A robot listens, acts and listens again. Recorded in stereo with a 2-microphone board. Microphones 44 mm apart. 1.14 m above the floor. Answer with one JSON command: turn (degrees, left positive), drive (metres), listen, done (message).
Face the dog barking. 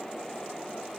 {"listen": true}
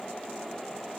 {"listen": true}
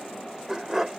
{"turn": -30}
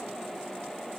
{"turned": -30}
{"listen": true}
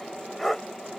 {"done": "Facing the dog barking."}